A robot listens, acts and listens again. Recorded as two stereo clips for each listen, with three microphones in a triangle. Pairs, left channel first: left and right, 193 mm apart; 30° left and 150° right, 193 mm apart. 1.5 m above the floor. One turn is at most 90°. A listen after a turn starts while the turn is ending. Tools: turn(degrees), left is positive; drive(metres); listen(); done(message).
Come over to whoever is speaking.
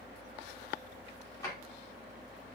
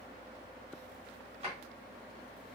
listen()
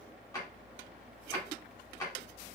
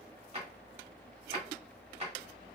listen()
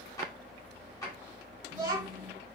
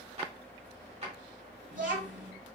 turn(degrees=-90)
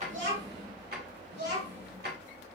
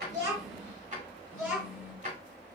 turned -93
turn(degrees=-70)
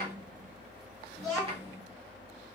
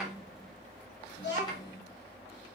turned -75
drive(metres=1.0)
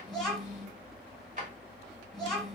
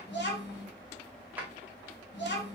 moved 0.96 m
drive(metres=1.0)
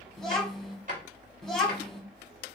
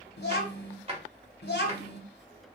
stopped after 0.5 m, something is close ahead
done("I am next to the child speaking.")